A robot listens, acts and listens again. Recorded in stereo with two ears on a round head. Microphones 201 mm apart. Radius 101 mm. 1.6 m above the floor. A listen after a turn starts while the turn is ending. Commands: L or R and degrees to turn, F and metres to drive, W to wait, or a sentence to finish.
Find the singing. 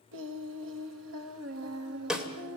R75
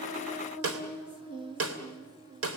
R20
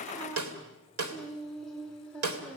Facing the singing.